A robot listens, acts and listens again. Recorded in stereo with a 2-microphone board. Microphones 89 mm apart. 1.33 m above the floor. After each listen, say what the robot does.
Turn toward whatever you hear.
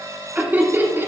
Turn 25° right.
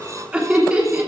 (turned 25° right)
Turn 15° right.
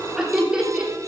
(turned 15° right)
Turn 30° right.
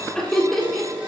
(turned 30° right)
Found it: laughter, straight ahead, 2 to 4 m away.